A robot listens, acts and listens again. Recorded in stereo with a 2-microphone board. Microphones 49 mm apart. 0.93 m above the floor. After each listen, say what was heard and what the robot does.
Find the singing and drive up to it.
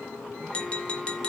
Keep listening.
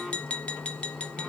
Keep listening.
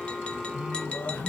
The singing: about 40° left or 140° left. Turn 40° left.
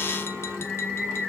Drive 1.0 m forward.
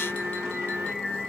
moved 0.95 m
Drive 1.0 m forward.
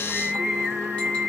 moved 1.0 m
Drive 1.0 m forward.
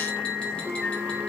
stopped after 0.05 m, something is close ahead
Arrived at the singing, straight ahead.